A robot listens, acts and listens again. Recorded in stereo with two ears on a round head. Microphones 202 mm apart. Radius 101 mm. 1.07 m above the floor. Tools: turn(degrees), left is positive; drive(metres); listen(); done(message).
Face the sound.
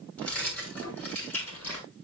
turn(degrees=30)
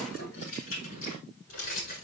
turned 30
turn(degrees=135)
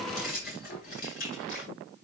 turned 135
turn(degrees=40)
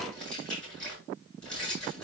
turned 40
done("Found it: keys jangling, straight ahead, over 4 m away.")